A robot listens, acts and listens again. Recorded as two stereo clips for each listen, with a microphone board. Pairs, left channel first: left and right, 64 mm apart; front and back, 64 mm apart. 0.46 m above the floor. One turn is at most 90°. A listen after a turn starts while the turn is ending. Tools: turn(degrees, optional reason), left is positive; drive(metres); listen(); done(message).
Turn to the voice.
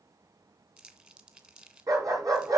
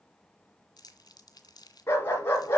listen()
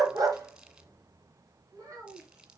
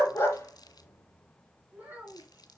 turn(degrees=-90, reason="The child speaking: 115° right.")
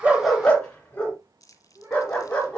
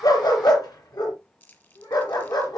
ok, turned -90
turn(degrees=-40, reason="The child speaking is now 40° right.")
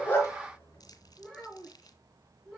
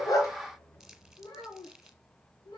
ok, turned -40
done("Facing the child speaking.")